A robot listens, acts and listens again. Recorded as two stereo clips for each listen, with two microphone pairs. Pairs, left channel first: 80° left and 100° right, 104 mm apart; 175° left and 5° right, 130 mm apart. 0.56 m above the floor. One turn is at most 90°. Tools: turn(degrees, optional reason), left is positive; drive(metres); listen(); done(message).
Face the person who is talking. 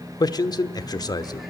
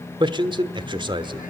turn(degrees=35, reason="The man speaking: 35° left.")
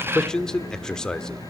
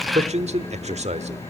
done("Found it: a man speaking, straight ahead, 1 to 2 m away.")